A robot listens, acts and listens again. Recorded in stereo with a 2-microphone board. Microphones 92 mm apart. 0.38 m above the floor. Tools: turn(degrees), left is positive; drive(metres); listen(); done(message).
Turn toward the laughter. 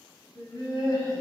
turn(degrees=55)
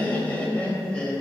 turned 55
turn(degrees=10)
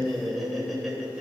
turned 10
turn(degrees=-10)
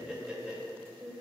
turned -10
turn(degrees=-20)
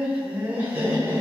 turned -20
turn(degrees=-30)
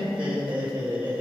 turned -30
turn(degrees=-20)
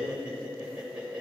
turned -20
turn(degrees=-15)
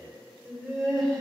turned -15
done("Facing the laughter, 1 to 2 m away.")